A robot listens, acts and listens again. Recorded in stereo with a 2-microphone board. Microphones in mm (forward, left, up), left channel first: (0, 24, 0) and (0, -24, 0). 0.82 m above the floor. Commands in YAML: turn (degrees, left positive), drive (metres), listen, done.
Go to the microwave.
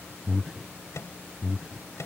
turn: 90
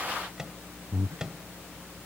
turn: -15
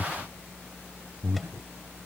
listen: true
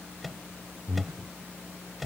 drive: 1.0
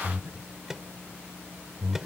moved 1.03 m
turn: -10
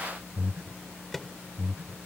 drive: 1.0
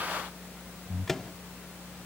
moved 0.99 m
drive: 1.0
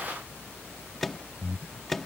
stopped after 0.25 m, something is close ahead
done: "I am next to the microwave."